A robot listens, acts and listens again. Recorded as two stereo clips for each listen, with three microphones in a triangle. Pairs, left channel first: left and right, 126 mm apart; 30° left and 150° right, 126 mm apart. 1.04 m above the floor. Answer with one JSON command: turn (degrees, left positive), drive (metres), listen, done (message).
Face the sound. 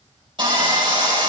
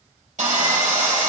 {"turn": -140}
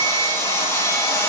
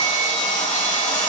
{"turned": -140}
{"turn": 25}
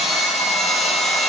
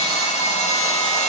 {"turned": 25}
{"done": "Found it: sawing, straight ahead, 2 to 4 m away."}